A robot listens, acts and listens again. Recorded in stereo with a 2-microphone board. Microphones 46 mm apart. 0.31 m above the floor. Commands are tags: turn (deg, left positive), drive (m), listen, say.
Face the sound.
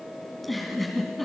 <turn deg="30"/>
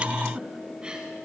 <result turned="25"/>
<turn deg="-25"/>
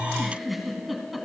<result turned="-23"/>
<say>Facing the giggle.</say>